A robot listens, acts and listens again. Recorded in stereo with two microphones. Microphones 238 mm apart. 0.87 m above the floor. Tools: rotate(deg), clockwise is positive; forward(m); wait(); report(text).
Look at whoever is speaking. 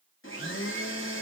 wait()
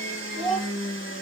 rotate(-20)
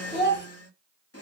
rotate(-140)
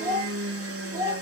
rotate(30)
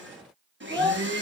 rotate(15)
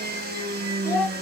report("Found it: a child speaking, straight ahead.")